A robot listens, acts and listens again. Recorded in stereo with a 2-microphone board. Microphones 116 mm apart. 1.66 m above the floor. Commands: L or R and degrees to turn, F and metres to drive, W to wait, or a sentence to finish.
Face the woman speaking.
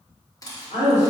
L90
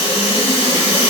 W
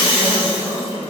R10
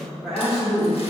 Facing the woman speaking.